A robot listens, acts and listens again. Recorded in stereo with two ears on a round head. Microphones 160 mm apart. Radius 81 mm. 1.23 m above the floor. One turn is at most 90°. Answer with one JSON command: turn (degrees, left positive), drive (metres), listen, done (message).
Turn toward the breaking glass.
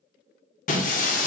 {"turn": 45}
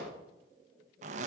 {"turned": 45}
{"listen": true}
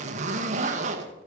{"done": "I heard breaking glass, but can't make it out now. It was about straight ahead or 90° left."}